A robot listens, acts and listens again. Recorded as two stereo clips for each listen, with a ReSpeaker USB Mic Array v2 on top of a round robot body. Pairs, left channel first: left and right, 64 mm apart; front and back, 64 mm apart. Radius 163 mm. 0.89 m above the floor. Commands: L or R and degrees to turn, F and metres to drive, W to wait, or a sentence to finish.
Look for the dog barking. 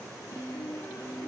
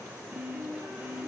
W
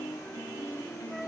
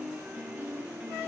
W
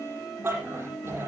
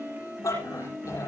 R35
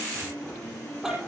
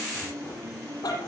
Found it: a dog barking, straight ahead.